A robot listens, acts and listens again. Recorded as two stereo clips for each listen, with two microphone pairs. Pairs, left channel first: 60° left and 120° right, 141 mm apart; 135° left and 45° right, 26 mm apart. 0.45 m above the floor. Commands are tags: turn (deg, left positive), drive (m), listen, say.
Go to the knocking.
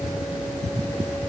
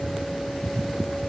<listen/>
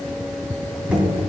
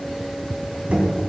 <turn deg="-40"/>
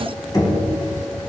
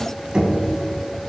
<drive m="1.0"/>
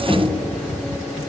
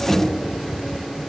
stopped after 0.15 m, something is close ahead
<say>Blocked. The knocking is further on, straight ahead.</say>